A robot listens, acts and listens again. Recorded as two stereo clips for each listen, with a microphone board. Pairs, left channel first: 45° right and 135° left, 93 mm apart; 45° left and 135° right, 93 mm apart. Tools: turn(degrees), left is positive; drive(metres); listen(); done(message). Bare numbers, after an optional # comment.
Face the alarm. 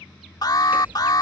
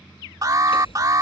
# The alarm: 85° right.
turn(-85)
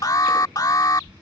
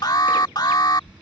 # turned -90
done("Found it: an alarm, straight ahead.")